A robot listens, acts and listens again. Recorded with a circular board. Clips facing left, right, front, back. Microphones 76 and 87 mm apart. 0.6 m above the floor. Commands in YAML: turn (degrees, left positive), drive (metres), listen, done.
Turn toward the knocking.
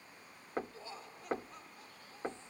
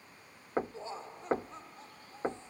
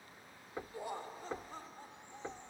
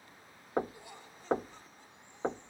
turn: -155
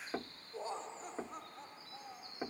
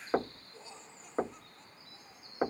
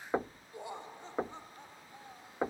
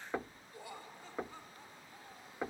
turn: -60
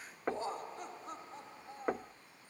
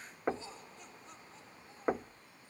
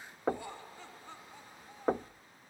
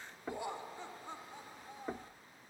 turn: -10
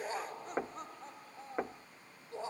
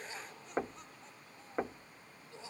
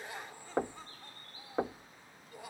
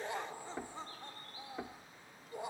done: "Facing the knocking."